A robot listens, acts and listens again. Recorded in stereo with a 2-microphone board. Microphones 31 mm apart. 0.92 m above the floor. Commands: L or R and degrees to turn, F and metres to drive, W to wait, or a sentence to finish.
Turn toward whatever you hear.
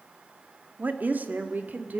R90
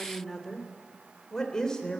L20
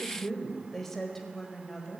L10
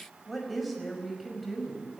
Facing the woman speaking.